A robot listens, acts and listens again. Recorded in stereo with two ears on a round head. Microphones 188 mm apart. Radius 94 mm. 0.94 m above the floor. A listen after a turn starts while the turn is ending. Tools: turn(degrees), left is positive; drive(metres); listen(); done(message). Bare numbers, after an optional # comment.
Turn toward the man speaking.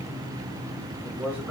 turn(-30)
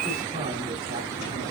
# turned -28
listen()
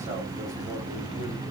listen()
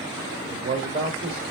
# So it is at 135° right.
turn(-135)
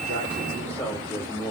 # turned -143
# The man speaking is now 10° left.
turn(10)
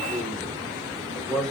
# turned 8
done("Found it: a man speaking, straight ahead.")